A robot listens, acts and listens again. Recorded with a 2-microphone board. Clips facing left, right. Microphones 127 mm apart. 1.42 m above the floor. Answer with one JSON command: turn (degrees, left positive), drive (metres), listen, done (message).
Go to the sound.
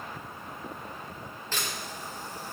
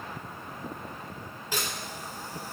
{"turn": -30}
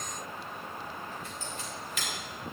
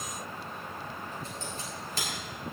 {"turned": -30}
{"turn": -140}
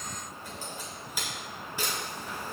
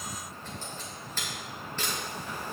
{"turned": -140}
{"turn": 10}
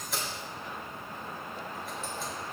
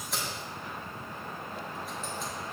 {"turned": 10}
{"drive": 1.0}
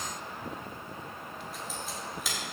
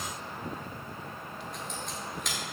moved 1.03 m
{"drive": 1.0}
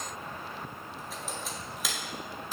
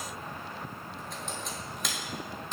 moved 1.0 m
{"drive": 1.0}
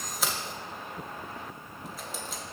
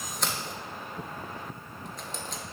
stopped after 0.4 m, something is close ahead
{"done": "I am next to the camera shutter."}